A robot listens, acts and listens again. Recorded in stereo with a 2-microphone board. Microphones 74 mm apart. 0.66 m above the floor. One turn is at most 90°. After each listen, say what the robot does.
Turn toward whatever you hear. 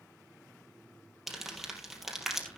Turn 30° left.
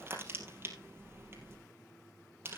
Turn 30° right.
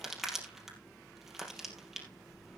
Facing the crumpling, 2 to 4 m away.